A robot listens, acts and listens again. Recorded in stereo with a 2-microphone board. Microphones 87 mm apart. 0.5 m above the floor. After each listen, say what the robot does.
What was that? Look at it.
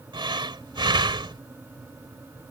Turn 65° right.
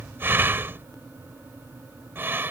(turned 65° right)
Turn 30° right.
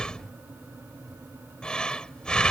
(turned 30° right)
Turn 10° left.
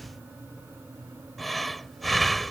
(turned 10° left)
Found it: breathing, straight ahead.